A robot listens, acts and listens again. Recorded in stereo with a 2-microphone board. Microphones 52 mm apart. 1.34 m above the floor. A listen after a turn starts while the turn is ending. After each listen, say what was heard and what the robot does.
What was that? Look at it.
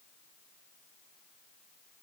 Keep listening.
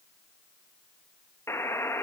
The buzzer: about 60° left or 120° left. Turn 60° left.
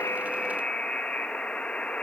So it is at 25° left. Turn 25° left.
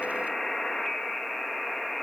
Facing the buzzer.